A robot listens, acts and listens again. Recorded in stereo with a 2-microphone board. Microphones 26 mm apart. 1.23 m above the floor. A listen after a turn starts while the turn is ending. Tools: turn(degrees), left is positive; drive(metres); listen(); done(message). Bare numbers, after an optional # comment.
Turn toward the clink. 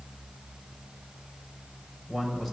listen()
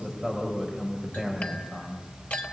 turn(90)
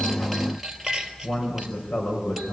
done("Found it: a clink, straight ahead.")